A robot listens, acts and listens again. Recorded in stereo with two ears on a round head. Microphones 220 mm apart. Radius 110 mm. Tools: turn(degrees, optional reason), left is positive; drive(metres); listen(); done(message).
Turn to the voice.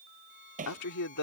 turn(degrees=90)
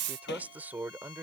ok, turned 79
turn(degrees=-10, reason="So it is at 10° right.")
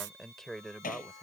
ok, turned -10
done("Facing the man speaking.")